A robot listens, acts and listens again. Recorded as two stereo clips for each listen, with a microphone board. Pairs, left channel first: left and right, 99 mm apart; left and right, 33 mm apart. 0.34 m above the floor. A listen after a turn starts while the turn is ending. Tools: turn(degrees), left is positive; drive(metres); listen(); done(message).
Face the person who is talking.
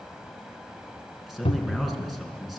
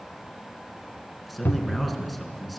turn(degrees=-30)
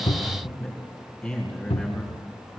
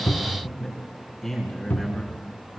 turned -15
turn(degrees=10)
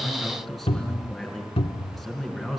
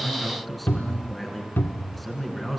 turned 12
done("Facing the man speaking, over 4 m away.")